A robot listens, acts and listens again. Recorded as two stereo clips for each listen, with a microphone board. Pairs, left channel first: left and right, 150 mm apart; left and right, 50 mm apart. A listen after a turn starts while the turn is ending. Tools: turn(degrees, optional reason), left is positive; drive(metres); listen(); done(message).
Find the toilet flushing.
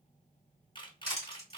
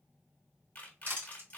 listen()
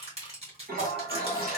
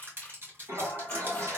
turn(degrees=-90)
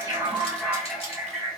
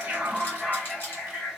done("Found it: a toilet flushing, straight ahead.")